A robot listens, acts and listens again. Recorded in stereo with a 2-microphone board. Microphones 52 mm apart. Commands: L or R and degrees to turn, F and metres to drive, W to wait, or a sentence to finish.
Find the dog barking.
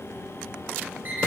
W
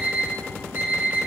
W
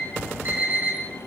I can't make out a dog barking to turn to.